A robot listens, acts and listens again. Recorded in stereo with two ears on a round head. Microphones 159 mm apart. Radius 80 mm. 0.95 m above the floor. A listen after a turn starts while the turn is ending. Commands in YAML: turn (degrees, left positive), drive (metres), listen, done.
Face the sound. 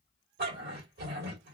turn: -60
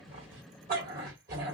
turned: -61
turn: -55
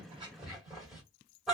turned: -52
done: "Found it: a dog barking, straight ahead."